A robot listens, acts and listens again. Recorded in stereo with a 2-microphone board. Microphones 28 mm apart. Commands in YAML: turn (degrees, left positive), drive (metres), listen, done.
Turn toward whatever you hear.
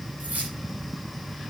turn: -90
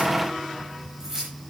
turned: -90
turn: -15
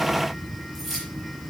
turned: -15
done: "Facing the keys jangling."